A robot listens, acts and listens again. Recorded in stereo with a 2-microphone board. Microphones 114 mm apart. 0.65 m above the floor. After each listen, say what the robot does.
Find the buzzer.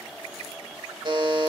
Turn 40° right.
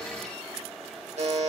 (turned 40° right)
Turn 95° right.
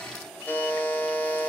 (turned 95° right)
Turn 15° left.
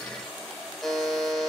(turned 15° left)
Facing the buzzer.